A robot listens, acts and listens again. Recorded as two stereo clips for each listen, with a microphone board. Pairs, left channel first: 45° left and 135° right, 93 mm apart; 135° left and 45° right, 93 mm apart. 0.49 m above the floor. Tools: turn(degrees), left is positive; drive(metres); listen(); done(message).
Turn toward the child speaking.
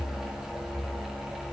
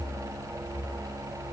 listen()
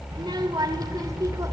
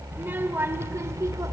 turn(degrees=-95)
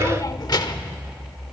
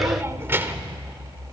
turn(degrees=20)
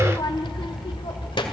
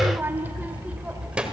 turn(degrees=35)
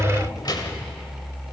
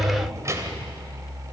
turn(degrees=10)
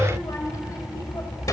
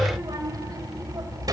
done("Facing the child speaking.")